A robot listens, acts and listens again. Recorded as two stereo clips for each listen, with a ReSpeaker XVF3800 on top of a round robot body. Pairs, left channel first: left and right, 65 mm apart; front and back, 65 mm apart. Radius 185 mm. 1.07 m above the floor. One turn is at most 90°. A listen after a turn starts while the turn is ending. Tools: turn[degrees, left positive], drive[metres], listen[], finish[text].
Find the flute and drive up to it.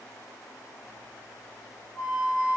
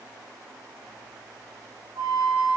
Thought: The flute: straight behind.
Action: turn[90]
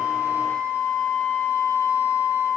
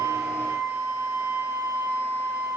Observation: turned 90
Thought: The flute is now 100° left.
Action: turn[90]
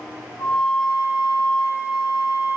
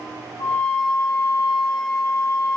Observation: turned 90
Thought: The flute is now 30° left.
Action: turn[30]
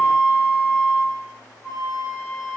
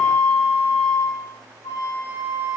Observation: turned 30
Action: drive[1.0]
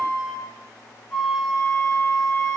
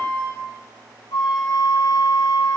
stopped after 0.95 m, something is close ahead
Action: finish[I am next to the flute.]